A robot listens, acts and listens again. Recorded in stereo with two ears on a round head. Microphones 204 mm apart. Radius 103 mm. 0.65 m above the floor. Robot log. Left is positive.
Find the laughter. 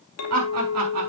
cmd yaw -90
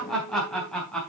end: Facing the laughter.